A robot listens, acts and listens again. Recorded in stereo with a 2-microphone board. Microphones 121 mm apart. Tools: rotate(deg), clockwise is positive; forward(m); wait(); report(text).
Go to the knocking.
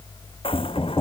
rotate(-30)
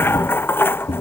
rotate(-115)
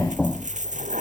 rotate(-10)
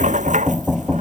forward(1.0)
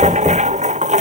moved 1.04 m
wait()
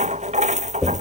forward(1.0)
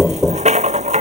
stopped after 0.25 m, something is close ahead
report("Arrived at the knocking, straight ahead.")